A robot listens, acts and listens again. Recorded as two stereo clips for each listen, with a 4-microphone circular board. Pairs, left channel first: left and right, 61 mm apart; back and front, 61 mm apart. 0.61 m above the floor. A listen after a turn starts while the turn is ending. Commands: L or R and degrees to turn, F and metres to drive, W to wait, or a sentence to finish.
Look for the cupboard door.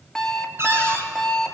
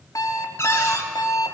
R135
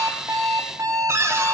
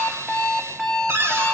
R45
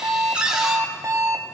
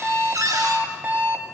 R10
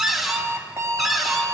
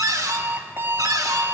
Facing the cupboard door.